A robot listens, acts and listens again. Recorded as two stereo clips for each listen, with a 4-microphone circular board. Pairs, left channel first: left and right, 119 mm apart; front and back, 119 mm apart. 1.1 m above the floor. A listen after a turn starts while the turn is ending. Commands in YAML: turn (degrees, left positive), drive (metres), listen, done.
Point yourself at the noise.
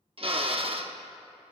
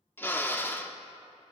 turn: -70
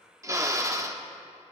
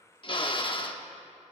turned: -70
turn: -35
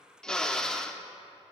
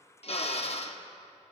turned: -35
done: "Facing the drill."